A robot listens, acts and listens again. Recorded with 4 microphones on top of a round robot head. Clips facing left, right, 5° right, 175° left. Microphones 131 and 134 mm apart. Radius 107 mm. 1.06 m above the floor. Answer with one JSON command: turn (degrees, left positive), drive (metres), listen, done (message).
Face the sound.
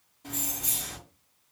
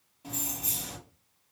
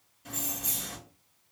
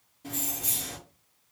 {"turn": -170}
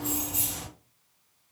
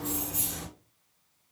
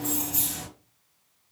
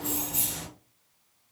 {"turn": 10}
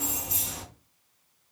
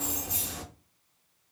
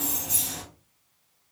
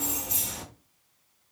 {"done": "Found it: keys jangling, straight ahead, 1 to 2 m away."}